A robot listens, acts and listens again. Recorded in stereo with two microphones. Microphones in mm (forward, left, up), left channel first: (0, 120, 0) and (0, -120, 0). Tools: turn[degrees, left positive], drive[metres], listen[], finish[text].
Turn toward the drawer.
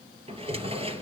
Thought: The drawer: about 25° right or 155° right.
Action: turn[-25]
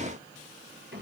Thought: So it is at 130° right.
Action: turn[-130]
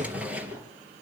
Action: finish[Facing the drawer.]